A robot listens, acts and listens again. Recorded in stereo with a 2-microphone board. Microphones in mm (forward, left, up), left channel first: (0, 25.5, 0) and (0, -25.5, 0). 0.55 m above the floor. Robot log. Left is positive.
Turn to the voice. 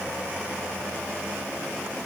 cmd idle
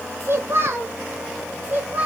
note: The child speaking: about 35° right or 145° right.
cmd yaw -35
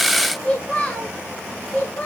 note: So it is at 35° left.
cmd yaw +35
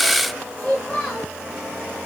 note: The child speaking is now 15° left.
cmd yaw +15
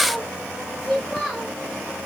end: Found it: a child speaking, straight ahead, 1 to 2 m away.